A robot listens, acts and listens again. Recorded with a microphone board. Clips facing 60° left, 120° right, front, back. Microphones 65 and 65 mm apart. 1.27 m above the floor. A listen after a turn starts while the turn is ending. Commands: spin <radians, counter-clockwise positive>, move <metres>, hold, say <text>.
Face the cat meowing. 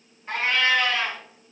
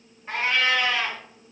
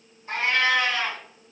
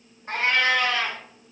spin 2.88
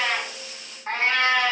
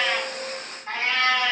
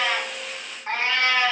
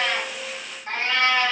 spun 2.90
spin 1.05
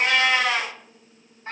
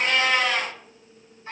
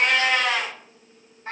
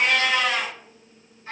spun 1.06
spin 0.35
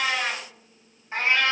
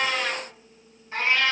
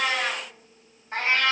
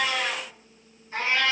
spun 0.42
say Found it: a cat meowing, straight ahead, 1 to 2 m away.